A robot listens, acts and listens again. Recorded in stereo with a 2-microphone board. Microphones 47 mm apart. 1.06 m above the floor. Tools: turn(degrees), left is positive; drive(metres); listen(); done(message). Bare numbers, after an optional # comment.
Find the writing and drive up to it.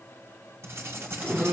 # The writing: about 60° right or 120° right.
turn(-60)
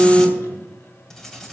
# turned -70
# So it is at 10° left.
turn(10)
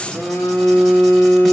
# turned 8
listen()
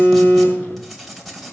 drive(1.0)
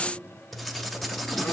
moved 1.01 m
drive(1.0)
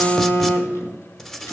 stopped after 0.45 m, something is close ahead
# The writing is now 10° left.
turn(10)
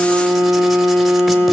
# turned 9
listen()
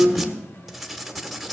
done("I am next to the writing.")